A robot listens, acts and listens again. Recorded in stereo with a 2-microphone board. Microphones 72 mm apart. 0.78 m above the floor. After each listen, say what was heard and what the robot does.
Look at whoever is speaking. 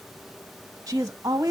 The woman speaking: about 45° right or 135° right. Turn 45° right.
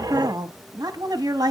So it is at 80° right. Turn 80° right.
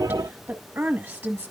The woman speaking is now 35° right. Turn 35° right.
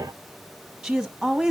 The woman speaking is now 15° right. Turn 15° right.
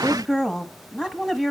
Facing the woman speaking.